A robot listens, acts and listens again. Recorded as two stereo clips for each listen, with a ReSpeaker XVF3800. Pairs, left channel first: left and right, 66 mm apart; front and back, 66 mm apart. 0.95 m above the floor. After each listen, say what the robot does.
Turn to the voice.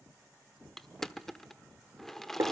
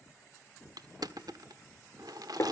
Keep listening.
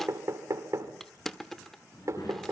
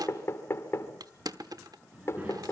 Turn 115° left.
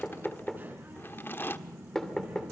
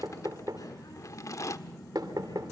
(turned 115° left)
Turn 30° right.
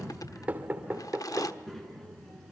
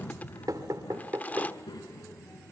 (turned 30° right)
Found it: a child speaking, straight ahead, over 4 m away.